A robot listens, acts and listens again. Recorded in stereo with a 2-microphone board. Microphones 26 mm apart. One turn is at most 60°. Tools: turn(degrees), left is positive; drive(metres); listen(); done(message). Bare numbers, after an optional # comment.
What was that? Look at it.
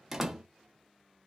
# The door slam: about 15° right or 165° right.
turn(-15)
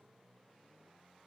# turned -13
listen()
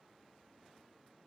done("I heard a door slam, but can't make it out now. It was about 5° right or 150° right.")